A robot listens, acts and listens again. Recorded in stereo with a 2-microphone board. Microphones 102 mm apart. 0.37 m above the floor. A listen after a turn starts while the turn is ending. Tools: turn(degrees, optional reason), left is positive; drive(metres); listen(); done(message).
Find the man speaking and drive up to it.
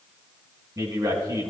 turn(degrees=-35, reason="The man speaking: about 35° right or 145° right.")
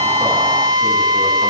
listen()
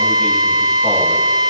listen()
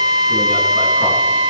done("I heard a man speaking, but can't make it out now. It was about straight ahead or 110° right. I did not reach it.")